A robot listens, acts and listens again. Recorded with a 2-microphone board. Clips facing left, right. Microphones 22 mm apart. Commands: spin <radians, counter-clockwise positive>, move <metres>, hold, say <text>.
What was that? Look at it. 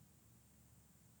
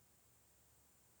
hold
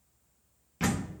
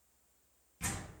spin 0.87
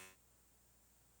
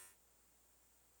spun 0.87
hold
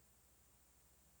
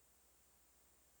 say I heard a door slam, but can't make it out now. It was about straight ahead or 80° left.